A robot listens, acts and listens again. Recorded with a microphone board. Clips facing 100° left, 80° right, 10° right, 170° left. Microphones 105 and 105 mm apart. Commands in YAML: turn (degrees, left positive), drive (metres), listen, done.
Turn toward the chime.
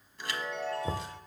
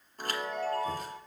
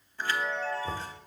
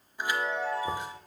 turn: -115
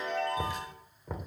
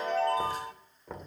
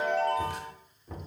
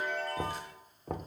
turn: -25
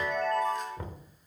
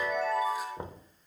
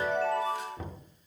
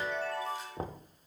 done: "Facing the chime."